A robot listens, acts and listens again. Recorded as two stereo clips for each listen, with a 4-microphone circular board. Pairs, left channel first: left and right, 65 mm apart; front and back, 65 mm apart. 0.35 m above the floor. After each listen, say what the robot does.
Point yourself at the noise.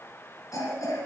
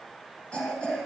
Turn 75° left.
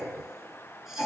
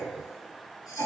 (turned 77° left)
Found it: a cough, straight ahead, over 4 m away.